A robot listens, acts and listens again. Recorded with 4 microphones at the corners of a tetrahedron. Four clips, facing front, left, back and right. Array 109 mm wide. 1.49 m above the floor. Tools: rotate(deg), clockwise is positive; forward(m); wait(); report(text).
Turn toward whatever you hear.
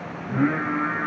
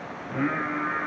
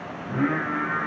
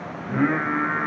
rotate(100)
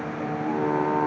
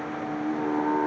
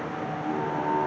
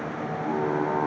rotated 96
rotate(30)
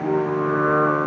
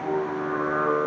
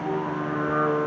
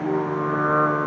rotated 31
rotate(10)
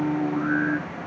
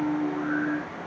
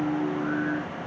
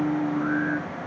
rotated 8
report("Found it: singing, straight ahead, 2 to 4 m away.")